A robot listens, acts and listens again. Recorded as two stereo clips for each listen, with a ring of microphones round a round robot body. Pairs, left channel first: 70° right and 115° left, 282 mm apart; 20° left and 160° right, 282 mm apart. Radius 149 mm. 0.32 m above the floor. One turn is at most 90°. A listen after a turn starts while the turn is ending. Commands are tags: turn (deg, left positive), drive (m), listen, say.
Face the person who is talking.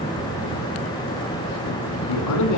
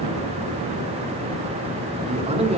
<turn deg="-90"/>
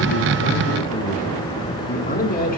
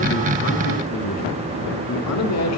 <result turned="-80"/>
<turn deg="-10"/>
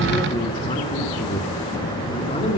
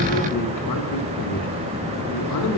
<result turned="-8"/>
<say>Facing the man speaking.</say>